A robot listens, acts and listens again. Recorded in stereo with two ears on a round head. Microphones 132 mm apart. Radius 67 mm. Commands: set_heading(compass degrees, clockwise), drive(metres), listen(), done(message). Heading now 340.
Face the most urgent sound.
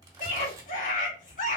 set_heading(285)
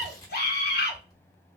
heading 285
set_heading(220)
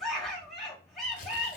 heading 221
done("Facing the scream, 1 to 2 m away.")